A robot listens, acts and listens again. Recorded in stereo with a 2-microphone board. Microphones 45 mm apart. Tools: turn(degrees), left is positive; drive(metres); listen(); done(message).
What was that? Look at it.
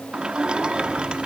turn(degrees=-25)
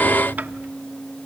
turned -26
turn(degrees=-125)
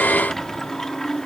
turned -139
turn(degrees=15)
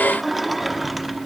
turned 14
done("Found it: a sliding door, straight ahead.")